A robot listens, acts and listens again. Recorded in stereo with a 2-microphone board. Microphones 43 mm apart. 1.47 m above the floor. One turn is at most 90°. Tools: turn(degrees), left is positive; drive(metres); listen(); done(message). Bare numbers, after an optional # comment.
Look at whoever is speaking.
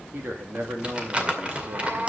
# The man speaking: about 65° right or 115° right.
turn(-65)
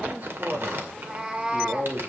# So it is at 55° right.
turn(-55)
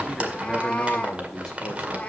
listen()
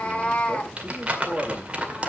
done("Facing the man speaking, 2 to 4 m away.")